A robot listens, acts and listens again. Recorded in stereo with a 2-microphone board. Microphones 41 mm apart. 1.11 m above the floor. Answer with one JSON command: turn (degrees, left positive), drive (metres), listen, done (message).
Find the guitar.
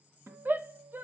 {"turn": -65}
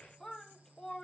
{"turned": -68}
{"listen": true}
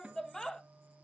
{"turn": -30}
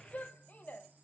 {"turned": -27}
{"listen": true}
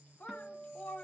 {"done": "Found it: a guitar, straight ahead, 2 to 4 m away."}